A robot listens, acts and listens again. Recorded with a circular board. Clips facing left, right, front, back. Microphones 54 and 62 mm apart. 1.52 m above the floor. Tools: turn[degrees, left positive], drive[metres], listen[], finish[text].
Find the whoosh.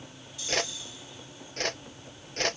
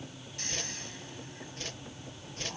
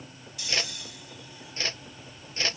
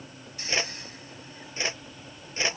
Thought: The whoosh: 105° left.
Action: turn[105]
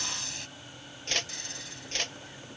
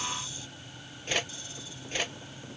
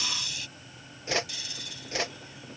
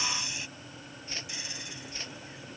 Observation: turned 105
Thought: The whoosh is now 10° right.
Action: turn[-10]
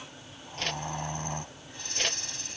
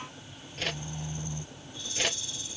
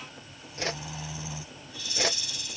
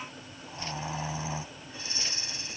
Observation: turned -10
Action: finish[Facing the whoosh.]